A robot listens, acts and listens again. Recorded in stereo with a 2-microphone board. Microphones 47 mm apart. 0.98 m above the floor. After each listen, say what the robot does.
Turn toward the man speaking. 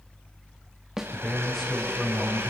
Turn 30° left.
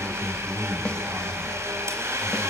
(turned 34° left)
Turn 35° right.
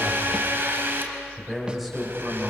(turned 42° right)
Facing the man speaking, over 4 m away.